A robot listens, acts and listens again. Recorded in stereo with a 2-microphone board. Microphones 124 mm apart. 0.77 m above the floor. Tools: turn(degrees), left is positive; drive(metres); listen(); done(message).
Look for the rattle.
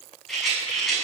turn(degrees=30)
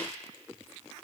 listen()
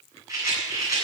turn(degrees=-30)
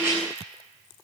turn(degrees=-20)
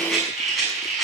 done("Found it: a rattle, straight ahead.")